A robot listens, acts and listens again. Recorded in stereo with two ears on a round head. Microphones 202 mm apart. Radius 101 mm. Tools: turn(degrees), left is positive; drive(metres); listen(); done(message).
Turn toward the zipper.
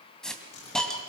turn(degrees=90)
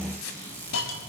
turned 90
turn(degrees=10)
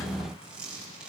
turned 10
done("Found it: a zipper, straight ahead, over 4 m away.")